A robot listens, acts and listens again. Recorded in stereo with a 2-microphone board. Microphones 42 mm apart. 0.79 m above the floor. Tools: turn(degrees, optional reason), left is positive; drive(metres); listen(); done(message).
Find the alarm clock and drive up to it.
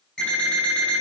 turn(degrees=30)
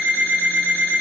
turn(degrees=135, reason="So it is at 135° left.")
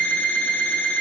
turn(degrees=50, reason="The alarm clock is now 50° left.")
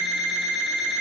turn(degrees=10, reason="The alarm clock is now 10° left.")
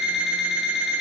drive(metres=1.0)
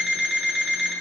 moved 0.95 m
drive(metres=1.0)
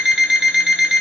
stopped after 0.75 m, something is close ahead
done("I am next to the alarm clock.")